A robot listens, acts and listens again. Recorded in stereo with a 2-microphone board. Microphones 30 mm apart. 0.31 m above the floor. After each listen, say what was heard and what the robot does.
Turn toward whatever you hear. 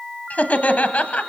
The laughter: about 55° left or 125° left. Turn 55° left.
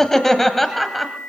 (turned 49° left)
Facing the laughter, 1 to 2 m away.